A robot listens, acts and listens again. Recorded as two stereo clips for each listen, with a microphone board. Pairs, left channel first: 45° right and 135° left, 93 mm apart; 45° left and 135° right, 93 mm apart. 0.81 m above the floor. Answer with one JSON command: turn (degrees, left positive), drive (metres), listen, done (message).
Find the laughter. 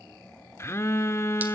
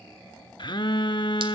{"listen": true}
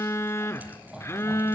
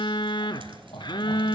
{"turn": 50}
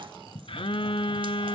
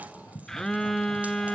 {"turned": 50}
{"done": "Found it: laughter, straight ahead, over 4 m away."}